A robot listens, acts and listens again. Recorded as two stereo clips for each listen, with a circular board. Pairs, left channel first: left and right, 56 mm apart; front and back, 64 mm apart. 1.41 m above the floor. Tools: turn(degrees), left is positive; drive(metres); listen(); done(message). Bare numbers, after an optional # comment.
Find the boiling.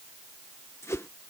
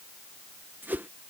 listen()
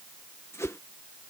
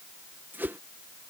listen()
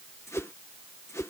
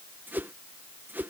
done("I can't make out boiling to turn to.")